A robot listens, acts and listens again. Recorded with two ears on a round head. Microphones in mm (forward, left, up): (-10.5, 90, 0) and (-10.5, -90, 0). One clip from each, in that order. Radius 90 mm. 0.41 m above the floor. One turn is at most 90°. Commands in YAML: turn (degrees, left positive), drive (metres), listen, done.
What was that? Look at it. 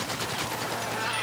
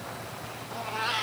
turn: -20
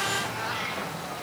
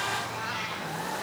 done: "Found it: a cat meowing, straight ahead, 2 to 4 m away."